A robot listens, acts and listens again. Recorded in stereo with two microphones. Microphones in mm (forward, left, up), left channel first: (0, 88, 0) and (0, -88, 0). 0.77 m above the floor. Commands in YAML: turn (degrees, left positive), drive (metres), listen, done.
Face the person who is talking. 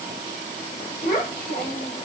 turn: 55
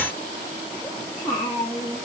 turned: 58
turn: 15
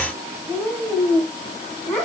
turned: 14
turn: 10
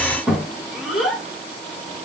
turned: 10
done: "Facing the child speaking, 2 to 4 m away."